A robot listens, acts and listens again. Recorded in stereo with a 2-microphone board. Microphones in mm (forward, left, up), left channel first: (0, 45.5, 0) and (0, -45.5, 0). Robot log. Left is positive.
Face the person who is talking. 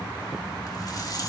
cmd idle
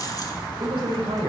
cmd yaw -90
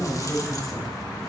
end: Facing the man speaking.